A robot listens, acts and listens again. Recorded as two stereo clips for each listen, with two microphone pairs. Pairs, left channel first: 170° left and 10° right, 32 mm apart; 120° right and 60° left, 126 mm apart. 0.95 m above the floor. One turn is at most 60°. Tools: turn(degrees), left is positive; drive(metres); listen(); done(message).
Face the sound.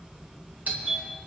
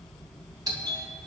done("Found it: a doorbell, straight ahead.")